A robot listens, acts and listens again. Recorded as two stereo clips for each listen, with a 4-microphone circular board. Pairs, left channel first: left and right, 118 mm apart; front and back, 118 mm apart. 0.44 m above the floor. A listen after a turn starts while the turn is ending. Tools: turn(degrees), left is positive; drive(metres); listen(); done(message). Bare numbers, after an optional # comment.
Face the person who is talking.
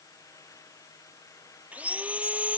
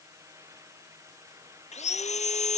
listen()
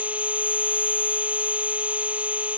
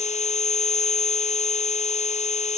listen()
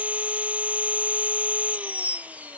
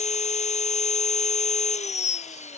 done("I can't make out anyone speaking to turn to.")